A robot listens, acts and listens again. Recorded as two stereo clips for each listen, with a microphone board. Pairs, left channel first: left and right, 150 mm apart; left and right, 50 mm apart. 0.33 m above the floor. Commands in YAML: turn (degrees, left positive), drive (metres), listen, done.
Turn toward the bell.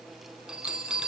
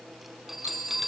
turn: -30
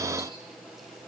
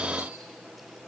listen: true
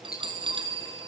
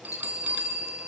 turn: -145
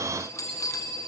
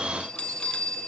turn: 20
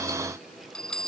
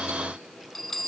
done: "Found it: a bell, straight ahead."